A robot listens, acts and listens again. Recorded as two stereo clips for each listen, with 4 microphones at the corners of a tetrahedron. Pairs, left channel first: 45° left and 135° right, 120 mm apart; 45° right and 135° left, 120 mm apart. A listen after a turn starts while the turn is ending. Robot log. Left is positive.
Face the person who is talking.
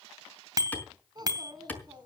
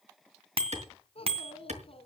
note: The child speaking: 80° right.
cmd yaw -80
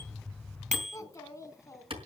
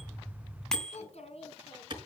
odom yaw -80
note: The child speaking is now 20° right.
cmd yaw -20
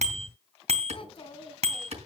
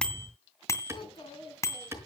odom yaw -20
end: Found it: a child speaking, straight ahead, 2 to 4 m away.